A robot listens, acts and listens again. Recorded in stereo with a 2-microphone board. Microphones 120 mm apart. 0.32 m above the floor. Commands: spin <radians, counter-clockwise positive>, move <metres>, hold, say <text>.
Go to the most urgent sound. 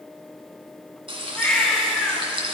spin 0.52
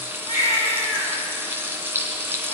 spin 2.53
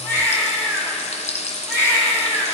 spin 0.35
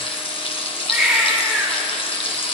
move 1.0
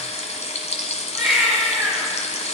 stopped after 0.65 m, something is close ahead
say Blocked. The baby crying is further on, straight ahead.